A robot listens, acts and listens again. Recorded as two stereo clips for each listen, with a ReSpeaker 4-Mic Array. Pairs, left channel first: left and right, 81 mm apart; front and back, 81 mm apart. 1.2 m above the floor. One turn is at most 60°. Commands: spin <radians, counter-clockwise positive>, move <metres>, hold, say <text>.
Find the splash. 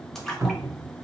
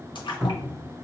say Facing the splash.